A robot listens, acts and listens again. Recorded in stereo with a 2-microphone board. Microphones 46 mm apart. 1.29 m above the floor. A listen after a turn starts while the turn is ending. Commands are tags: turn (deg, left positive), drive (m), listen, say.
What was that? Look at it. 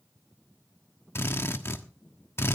<turn deg="60"/>
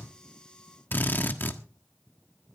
<turn deg="50"/>
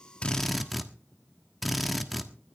<say>Found it: a drill, straight ahead.</say>